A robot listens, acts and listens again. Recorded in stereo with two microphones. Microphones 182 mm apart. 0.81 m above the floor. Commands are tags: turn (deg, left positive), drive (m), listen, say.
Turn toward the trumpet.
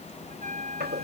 <turn deg="-45"/>
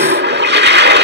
<listen/>
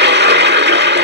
<listen/>
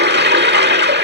<say>I heard a trumpet, but can't make it out now. It was about straight ahead or 90° right.</say>